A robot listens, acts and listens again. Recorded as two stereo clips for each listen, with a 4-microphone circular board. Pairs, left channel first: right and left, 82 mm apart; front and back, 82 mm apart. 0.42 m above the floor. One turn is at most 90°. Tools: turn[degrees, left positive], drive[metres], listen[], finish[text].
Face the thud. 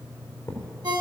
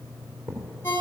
Thought: The thud: 140° right.
Action: turn[-90]
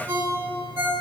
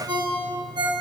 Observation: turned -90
Thought: Nothing new. It was at 50° right.
Action: turn[-50]
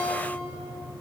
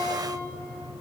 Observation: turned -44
Action: finish[I heard a thud from this way, but can't make it out now.]